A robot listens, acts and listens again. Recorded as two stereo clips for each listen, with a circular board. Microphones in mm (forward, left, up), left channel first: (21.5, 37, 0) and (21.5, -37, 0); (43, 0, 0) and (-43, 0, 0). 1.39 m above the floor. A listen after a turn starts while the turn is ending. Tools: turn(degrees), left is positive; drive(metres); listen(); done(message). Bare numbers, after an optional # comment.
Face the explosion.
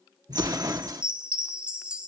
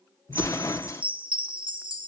# The explosion: 55° right.
turn(-55)
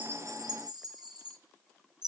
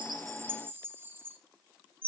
done("Facing where the explosion came from. I can't hear it now.")